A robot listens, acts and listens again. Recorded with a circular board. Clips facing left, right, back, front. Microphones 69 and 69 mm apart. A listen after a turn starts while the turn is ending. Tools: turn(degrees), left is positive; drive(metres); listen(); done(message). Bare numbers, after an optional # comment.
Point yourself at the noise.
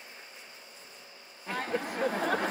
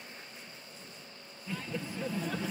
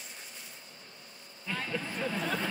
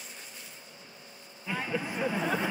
# The laughter: 75° left.
turn(75)
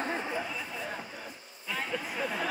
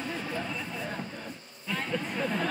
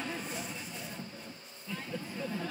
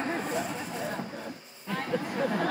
done("Facing the laughter.")